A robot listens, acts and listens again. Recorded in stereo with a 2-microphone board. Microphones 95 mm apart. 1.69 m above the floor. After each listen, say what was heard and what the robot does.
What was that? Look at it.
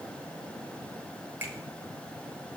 The finger snap: about 20° right or 160° right. Turn 20° right.
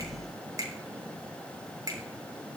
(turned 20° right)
So it is at 140° right. Turn 140° right.
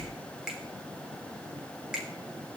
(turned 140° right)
Facing the finger snap, 2 to 4 m away.